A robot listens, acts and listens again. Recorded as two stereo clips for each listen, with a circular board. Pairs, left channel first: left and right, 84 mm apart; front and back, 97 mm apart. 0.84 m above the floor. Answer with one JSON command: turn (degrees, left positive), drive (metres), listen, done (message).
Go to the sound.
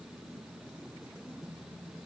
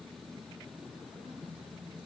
{"listen": true}
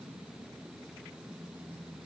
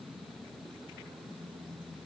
{"listen": true}
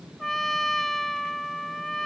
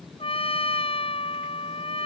{"drive": 1.0}
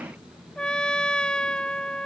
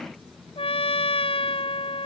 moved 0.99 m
{"turn": 10}
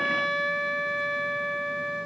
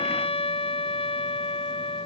{"drive": 1.0}
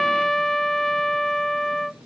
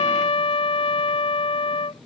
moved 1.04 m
{"drive": 1.0}
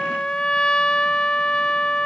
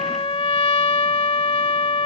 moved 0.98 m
{"turn": 10}
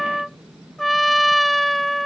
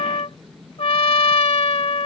{"drive": 1.0}
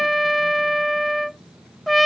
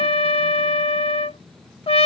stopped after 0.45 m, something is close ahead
{"done": "Arrived at the trumpet, straight ahead."}